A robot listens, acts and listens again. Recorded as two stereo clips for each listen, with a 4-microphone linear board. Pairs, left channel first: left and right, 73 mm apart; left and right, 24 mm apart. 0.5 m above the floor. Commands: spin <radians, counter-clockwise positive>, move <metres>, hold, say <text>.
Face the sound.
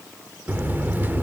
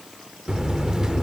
spin -0.44
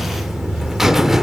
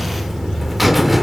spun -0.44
spin -0.17
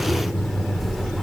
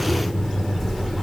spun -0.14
say Found it: a buzzer, straight ahead.